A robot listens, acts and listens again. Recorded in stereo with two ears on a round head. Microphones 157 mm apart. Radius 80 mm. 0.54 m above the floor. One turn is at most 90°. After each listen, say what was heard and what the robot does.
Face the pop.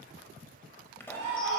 Turn 30° left.
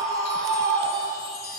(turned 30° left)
Keep listening.
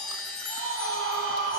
I heard a pop, but can't make it out now. It was about 15° right or 135° left.